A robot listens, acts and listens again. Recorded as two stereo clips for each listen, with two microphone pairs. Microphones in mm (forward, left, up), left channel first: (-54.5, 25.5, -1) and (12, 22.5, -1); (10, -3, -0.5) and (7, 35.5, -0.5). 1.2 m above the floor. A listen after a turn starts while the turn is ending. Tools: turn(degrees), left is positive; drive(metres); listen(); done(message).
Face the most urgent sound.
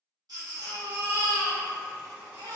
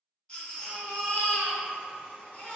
turn(degrees=-20)
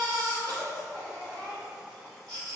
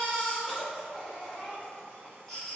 done("Found it: a baby crying, straight ahead, 1 to 2 m away.")